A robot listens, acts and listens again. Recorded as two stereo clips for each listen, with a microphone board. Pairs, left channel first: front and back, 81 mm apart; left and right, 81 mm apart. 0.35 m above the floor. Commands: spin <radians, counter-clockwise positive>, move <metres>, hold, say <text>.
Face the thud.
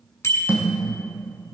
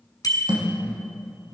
spin -1.92
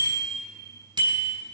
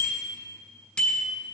say Facing where the thud came from. I can't hear it now.